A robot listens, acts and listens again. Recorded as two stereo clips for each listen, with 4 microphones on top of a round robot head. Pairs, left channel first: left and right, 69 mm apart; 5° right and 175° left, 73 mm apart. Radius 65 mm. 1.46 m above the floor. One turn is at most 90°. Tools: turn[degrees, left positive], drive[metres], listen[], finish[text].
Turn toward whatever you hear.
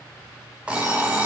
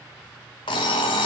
Thought: The alarm clock: 10° right.
Action: turn[-10]
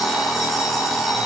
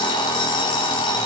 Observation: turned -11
Action: finish[Facing the alarm clock, 1 to 2 m away.]